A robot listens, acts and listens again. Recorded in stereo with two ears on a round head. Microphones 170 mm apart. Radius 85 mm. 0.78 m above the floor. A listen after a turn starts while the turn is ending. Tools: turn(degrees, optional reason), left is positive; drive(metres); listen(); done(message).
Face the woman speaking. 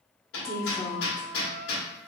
turn(degrees=30)
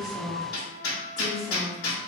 turn(degrees=30)
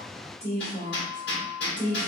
turn(degrees=30)
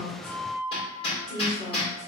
turn(degrees=150, reason="So it is at 150° left.")
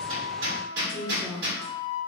done("Found it: a woman speaking, straight ahead, 2 to 4 m away.")